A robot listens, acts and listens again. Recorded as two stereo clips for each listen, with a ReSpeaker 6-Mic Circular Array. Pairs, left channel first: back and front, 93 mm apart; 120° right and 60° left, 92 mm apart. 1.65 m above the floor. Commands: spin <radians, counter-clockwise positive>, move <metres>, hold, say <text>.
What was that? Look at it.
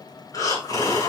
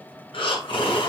spin -2.36
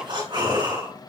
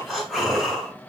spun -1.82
spin -0.52
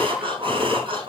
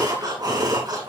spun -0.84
spin 0.26
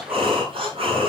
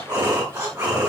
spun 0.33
say Facing the breathing.